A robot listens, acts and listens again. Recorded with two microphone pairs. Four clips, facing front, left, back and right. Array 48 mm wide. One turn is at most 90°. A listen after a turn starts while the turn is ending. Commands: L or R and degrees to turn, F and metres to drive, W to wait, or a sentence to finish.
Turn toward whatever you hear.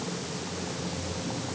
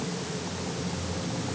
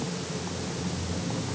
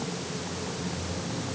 W
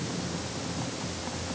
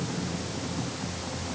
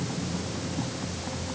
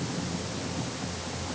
W
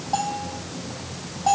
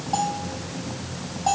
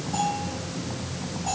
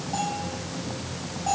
L50
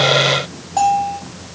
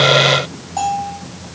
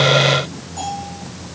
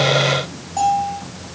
L20
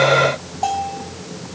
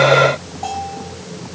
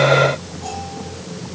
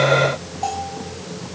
Found it: a bell, straight ahead.